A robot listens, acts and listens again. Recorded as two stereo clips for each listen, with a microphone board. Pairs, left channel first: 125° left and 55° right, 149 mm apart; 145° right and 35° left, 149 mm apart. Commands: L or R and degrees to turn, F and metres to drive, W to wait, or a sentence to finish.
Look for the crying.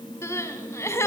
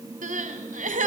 L55
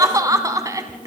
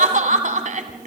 L10
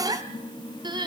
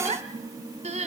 Facing the crying.